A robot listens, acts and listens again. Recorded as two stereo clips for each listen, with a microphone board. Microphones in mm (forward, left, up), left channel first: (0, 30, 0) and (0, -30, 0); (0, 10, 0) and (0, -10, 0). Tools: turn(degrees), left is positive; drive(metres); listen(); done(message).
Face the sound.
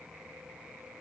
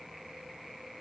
listen()
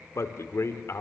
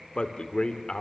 turn(degrees=50)
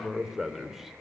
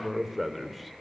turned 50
done("Found it: a man speaking, straight ahead, 2 to 4 m away.")